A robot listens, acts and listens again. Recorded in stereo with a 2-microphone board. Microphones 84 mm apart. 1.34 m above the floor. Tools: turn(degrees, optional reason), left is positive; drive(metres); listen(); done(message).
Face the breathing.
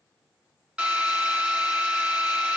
listen()
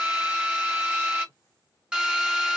listen()
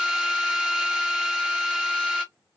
done("I can't make out breathing, only a drill.")